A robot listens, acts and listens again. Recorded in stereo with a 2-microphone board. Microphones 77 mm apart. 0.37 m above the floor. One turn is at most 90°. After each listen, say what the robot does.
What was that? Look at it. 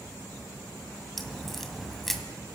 Turn 30° left.
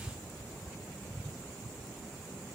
Keep listening.
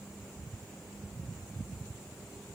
I heard a crack, but can't make it out now. It was about 30° right or 150° left.